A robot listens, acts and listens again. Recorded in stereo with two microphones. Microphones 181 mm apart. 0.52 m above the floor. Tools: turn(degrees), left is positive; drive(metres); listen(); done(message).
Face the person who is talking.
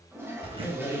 turn(degrees=25)
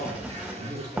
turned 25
turn(degrees=130)
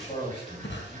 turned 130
turn(degrees=35)
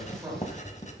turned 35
turn(degrees=-15)
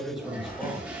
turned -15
done("Found it: a man speaking, straight ahead.")